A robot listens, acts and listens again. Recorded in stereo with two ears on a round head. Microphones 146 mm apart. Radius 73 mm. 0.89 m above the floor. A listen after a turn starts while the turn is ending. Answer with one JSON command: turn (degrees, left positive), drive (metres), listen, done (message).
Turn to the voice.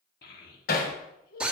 {"turn": 60}
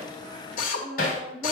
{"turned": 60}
{"done": "Found it: a child speaking, straight ahead, 1 to 2 m away."}